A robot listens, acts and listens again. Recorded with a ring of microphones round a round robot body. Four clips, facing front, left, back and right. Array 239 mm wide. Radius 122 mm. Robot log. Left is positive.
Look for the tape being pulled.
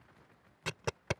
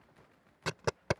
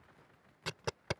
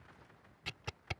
note: The tape being pulled: 85° left.
cmd yaw +85
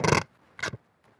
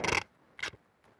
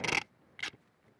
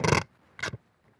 note: The tape being pulled is now 30° right.
cmd yaw -30
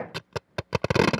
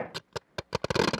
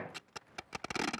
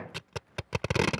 note: The tape being pulled is now 10° left.
cmd yaw +10
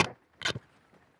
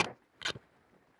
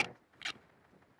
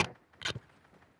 end: Facing the tape being pulled.